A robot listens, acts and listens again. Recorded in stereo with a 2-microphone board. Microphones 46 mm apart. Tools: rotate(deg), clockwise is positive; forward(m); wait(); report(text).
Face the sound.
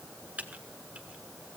rotate(35)
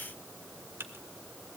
rotate(110)
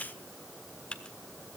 rotate(-25)
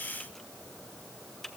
report("Found it: typing on a keyboard, straight ahead, 1 to 2 m away.")